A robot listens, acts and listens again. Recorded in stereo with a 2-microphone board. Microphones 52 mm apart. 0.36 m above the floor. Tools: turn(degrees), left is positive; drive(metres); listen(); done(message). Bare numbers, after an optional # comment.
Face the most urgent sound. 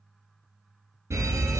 # The fire alarm: about 65° right or 115° right.
turn(-65)
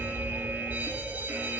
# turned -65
# So it is at 40° right.
turn(-40)
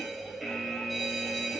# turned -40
done("Facing the fire alarm.")